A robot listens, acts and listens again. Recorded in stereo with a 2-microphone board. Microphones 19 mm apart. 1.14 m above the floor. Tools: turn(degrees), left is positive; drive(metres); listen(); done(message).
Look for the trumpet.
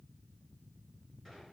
listen()
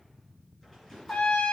turn(degrees=65)
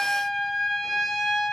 turn(degrees=15)
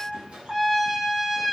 done("Facing the trumpet.")